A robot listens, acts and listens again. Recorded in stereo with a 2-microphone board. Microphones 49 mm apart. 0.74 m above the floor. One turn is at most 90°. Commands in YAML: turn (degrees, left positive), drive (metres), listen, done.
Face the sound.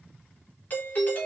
turn: 35
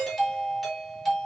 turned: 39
done: "Found it: a doorbell, straight ahead."